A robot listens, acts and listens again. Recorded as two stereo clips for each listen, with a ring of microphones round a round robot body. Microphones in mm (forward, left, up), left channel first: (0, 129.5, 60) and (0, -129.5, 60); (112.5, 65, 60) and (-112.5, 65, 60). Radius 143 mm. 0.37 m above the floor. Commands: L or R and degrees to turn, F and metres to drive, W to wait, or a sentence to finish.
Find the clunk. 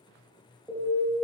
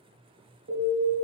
W
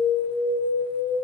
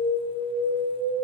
W
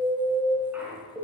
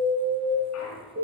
Found it: a clunk, straight ahead, 1 to 2 m away.